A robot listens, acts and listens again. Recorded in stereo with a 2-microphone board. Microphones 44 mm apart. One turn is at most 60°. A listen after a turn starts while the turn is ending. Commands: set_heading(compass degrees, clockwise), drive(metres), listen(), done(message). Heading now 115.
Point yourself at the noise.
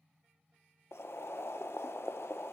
set_heading(55)
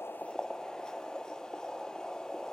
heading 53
set_heading(33)
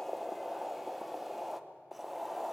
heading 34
done("Facing the boiling, under 1 m away.")